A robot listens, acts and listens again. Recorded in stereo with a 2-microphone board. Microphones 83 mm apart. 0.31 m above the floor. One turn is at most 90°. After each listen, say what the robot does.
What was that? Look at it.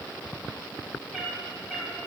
Turn 30° right.
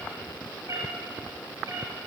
Turn 90° right.
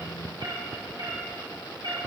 Turn 65° right.
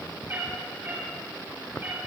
Turn 30° right.
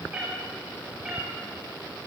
Turn 15° right.
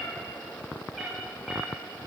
Found it: a cat meowing, straight ahead.